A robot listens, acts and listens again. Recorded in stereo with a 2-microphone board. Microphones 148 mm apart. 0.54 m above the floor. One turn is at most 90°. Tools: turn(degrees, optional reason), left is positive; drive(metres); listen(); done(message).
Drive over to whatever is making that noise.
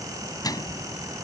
turn(degrees=25, reason="The microwave: about 25° left or 155° left.")
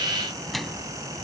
drive(metres=1.0)
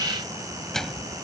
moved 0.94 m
drive(metres=1.0)
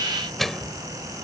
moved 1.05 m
drive(metres=1.0)
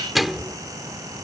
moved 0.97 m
drive(metres=1.0)
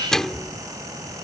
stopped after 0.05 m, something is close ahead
done("Arrived at the microwave, straight ahead.")